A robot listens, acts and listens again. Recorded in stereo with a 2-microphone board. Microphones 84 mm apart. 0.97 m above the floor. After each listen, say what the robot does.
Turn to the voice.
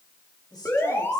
Turn 60° left.
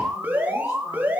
Keep listening.
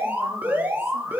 Keep listening.
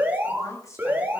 Turn 45° left.
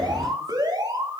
Keep listening.
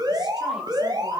Keep listening.
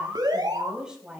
Turn 10° right.
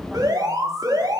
Keep listening.
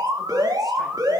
Keep listening.
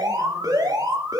Facing where the woman speaking came from. I can't hear it now.